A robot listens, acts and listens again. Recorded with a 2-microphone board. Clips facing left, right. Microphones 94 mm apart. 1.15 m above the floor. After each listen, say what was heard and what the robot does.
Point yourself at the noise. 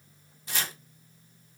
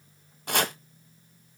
The chopping: about 60° right or 120° right. Turn 60° right.
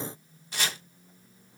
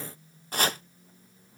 So it is at 50° right. Turn 50° right.
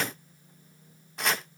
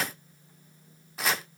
Facing the chopping, 1 to 2 m away.